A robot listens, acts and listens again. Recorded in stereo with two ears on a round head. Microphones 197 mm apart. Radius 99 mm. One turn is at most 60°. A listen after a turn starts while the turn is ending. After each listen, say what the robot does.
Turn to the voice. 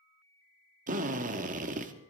Keep listening.
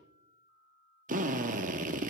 Keep listening.
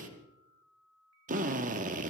I can't make out anyone speaking to turn to.